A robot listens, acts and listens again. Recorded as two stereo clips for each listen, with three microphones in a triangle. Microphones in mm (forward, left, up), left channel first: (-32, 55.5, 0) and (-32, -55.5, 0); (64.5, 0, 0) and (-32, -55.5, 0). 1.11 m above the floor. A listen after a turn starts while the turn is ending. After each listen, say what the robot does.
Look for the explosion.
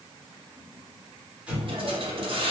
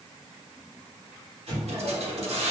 Turn 170° right.
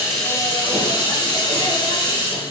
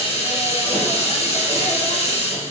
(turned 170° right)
Facing where the explosion came from. I can't hear it now.